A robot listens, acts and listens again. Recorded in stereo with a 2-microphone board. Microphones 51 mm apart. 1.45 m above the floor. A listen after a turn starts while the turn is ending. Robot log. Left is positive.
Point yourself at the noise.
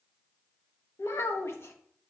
note: The child speaking: about 60° left or 120° left.
cmd yaw +60
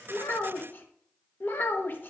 note: So it is at 50° left.
cmd yaw +50
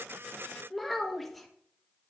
end: Facing the child speaking.